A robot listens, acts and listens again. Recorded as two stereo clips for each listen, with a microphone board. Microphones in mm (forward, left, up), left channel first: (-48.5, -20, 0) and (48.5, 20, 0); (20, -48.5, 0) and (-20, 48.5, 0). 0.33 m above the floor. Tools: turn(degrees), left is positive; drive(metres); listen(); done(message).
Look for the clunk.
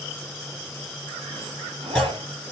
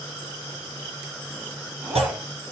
turn(degrees=120)
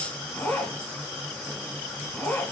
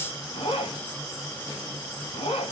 done("I heard a clunk from this way, but can't make it out now.")